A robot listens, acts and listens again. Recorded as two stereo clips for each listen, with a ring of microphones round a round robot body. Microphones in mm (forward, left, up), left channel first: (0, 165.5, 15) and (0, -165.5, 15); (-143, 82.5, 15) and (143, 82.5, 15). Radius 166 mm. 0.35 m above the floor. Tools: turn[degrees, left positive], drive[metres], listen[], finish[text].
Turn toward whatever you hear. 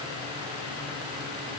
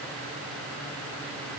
Action: listen[]
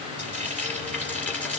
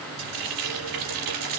Action: finish[Found it: frying, straight ahead.]